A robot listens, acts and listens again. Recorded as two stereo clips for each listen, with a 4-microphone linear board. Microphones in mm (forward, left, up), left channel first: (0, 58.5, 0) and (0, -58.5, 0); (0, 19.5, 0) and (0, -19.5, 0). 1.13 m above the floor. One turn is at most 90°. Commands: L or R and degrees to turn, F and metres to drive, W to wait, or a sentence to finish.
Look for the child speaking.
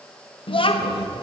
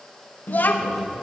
L50
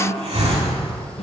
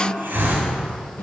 L75
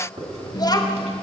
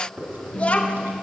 L35
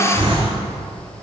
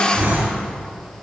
W
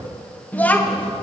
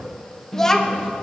L15
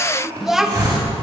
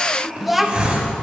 Found it: a child speaking, straight ahead.